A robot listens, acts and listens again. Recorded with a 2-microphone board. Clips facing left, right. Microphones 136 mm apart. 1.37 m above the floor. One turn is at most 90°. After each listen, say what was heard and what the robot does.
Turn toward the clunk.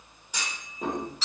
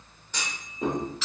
Turn 30° left.
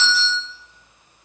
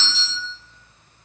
Keep listening.
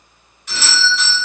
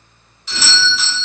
I heard a clunk, but can't make it out now. It was about 20° right or 140° left.